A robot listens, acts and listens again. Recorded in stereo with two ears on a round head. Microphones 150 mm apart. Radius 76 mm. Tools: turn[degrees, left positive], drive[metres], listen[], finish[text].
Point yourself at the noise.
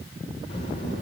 Thought: The child speaking: about 35° left or 145° left.
Action: turn[35]
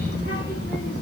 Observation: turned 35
Thought: So it is at 110° left.
Action: turn[110]
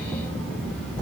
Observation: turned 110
Action: finish[Facing the child speaking, over 4 m away.]